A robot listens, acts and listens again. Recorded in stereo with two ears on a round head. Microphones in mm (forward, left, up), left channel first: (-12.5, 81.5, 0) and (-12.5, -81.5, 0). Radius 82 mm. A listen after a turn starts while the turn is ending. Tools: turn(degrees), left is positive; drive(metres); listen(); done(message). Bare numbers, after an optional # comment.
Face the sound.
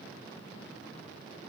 listen()
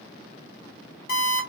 # The alarm clock: about 50° left or 130° left.
turn(50)
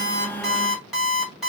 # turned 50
done("Facing the alarm clock.")